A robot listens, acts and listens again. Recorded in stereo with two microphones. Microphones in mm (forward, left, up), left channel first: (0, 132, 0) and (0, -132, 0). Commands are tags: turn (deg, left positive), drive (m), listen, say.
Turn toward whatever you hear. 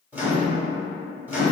<turn deg="-30"/>
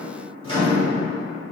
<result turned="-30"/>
<turn deg="25"/>
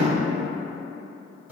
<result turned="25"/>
<turn deg="-10"/>
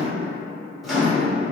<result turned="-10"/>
<say>Found it: a microwave, straight ahead, 1 to 2 m away.</say>